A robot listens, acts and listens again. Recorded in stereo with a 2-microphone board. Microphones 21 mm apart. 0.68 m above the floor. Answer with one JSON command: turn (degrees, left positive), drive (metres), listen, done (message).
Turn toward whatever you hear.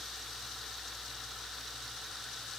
{"listen": true}
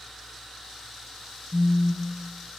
{"turn": -70}
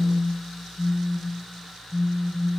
{"turn": -25}
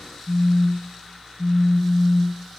{"done": "Found it: a phone buzzing, straight ahead, 1 to 2 m away."}